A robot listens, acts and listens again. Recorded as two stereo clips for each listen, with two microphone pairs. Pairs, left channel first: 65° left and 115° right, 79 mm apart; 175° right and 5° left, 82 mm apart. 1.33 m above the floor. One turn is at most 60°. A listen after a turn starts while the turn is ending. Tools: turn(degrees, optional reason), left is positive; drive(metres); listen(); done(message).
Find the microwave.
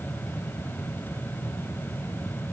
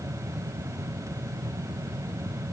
listen()
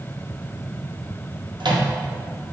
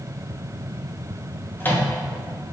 turn(degrees=-60, reason="The microwave: 110° right.")
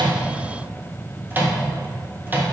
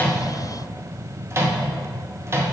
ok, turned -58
turn(degrees=-50, reason="The microwave is now 50° right.")
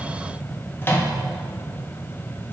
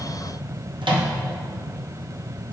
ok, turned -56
done("Found it: a microwave, straight ahead, 1 to 2 m away.")